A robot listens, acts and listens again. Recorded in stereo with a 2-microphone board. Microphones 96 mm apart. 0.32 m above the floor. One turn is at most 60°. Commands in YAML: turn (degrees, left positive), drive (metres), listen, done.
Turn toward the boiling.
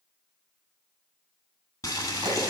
turn: 40
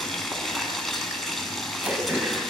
done: "Facing the boiling."